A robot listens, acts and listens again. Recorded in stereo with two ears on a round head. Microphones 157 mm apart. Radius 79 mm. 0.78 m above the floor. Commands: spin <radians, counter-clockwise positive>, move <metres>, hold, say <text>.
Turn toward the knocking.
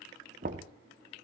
spin -0.87
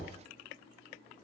say Facing the knocking.